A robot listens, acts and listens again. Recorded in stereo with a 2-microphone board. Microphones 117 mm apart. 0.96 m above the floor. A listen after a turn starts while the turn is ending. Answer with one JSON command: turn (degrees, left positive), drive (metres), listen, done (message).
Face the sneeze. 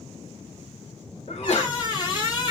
{"turn": 65}
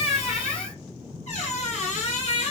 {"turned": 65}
{"listen": true}
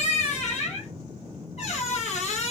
{"done": "I heard a sneeze, but can't make it out now. It was about straight ahead or 50° left."}